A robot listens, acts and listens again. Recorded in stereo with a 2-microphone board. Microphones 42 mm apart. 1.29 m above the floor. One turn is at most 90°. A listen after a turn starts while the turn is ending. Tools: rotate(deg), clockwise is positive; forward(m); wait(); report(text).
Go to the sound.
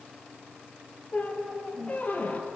rotate(-45)
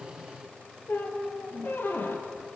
rotate(-85)
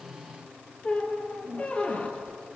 rotate(-40)
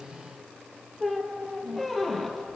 forward(1.0)
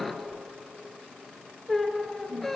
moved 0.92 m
rotate(-10)
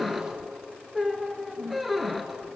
forward(1.0)
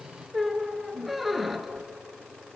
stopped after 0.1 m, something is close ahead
report("Arrived at the squeak, straight ahead.")